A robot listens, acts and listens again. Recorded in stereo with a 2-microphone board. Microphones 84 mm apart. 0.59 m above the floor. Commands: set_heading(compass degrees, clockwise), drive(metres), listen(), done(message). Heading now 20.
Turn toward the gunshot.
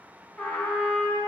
listen()
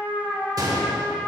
set_heading(65)
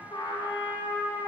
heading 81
listen()
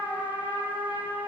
done("I heard a gunshot, but can't make it out now. It was about 15° left or 70° right.")